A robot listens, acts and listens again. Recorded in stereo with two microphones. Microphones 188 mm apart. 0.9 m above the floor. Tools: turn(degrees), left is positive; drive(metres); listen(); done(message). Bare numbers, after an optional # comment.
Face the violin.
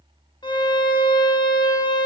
# The violin: about 25° left or 155° left.
turn(25)
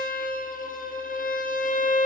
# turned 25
# So it is at 130° left.
turn(130)
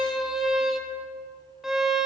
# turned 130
done("Found it: a violin, straight ahead.")